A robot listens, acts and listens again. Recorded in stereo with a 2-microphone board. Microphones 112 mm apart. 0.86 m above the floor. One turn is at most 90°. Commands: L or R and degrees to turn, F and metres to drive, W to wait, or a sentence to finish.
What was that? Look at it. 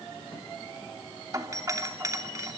R30
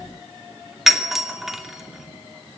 Facing the doorbell.